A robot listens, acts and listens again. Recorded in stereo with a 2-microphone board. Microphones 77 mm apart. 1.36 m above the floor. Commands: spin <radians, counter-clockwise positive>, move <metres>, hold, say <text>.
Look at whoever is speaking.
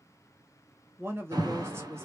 spin -0.61
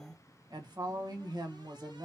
spin -2.01
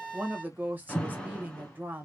spin -0.35
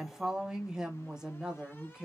spin -0.17
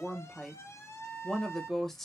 say Found it: a woman speaking, straight ahead, 1 to 2 m away.